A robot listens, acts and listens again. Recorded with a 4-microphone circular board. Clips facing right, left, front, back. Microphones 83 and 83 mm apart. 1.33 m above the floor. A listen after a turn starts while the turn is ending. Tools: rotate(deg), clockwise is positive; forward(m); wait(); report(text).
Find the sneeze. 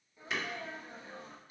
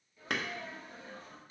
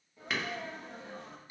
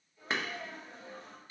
rotate(20)
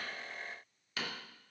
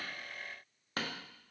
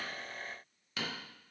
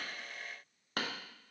report("I heard a sneeze from this way, but can't make it out now.")